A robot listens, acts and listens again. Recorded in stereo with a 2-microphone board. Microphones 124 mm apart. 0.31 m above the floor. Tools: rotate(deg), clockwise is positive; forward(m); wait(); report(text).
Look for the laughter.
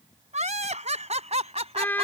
rotate(55)
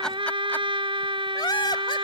rotate(-35)
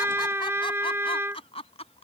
rotate(-50)
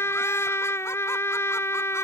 wait()
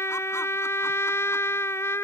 wait()
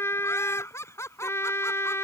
rotate(-20)
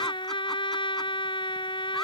wait()
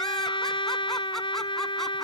wait()
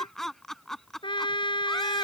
report("Facing the laughter.")